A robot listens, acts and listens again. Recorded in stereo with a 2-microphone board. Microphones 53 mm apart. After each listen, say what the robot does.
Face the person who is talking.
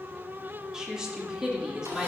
Turn 30° right.
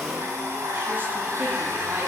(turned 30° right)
Keep listening.
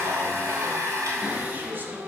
Keep listening.
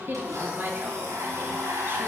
Turn 135° right.
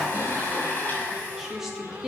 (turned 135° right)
Turn 10° right.
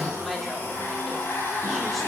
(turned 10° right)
Keep listening.
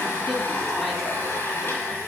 Keep listening.
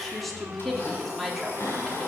Found it: a woman speaking, straight ahead, 2 to 4 m away.